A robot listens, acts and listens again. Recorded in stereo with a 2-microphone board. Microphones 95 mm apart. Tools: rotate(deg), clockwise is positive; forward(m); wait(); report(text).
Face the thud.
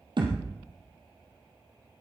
rotate(55)
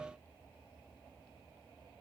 wait()
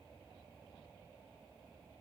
report("I heard a thud, but can't make it out now. It was about straight ahead or 70° right.")